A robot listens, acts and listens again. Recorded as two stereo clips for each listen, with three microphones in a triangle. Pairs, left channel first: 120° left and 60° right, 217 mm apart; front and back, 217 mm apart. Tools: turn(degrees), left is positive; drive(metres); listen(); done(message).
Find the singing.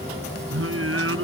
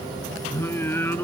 turn(degrees=-80)
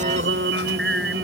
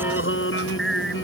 turn(degrees=-30)
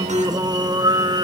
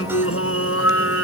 turn(degrees=10)
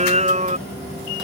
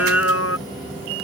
done("Found it: singing, straight ahead.")